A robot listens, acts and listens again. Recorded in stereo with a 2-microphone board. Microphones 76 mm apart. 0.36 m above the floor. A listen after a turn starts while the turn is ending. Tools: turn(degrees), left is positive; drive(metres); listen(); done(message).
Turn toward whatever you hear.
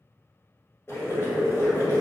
turn(degrees=35)
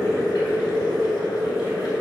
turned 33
turn(degrees=110)
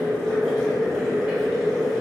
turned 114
done("Facing the boiling, 1 to 2 m away.")